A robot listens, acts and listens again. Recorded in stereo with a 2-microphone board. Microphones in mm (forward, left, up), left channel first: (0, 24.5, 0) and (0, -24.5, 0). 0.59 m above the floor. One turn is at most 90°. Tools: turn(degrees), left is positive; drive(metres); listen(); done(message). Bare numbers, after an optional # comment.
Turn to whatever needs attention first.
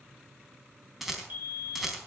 # The fire alarm: about 40° right or 140° right.
turn(-40)
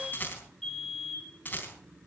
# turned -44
done("Found it: a fire alarm, straight ahead.")